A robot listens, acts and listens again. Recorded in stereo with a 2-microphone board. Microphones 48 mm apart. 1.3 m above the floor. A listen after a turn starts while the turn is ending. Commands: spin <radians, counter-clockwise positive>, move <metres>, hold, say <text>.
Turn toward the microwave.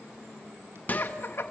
spin 0.61
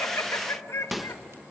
say Found it: a microwave, straight ahead, 1 to 2 m away.